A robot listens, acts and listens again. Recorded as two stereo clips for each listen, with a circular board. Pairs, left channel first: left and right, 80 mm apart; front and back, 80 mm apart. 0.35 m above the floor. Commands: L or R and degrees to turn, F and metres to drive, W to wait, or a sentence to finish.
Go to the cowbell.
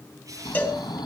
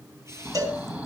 L155
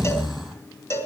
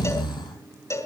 L45
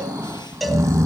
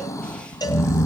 F1.0
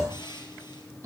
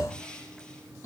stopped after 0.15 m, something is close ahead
W
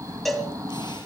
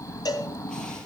Something is in my way. I am facing the cowbell but have not reached it.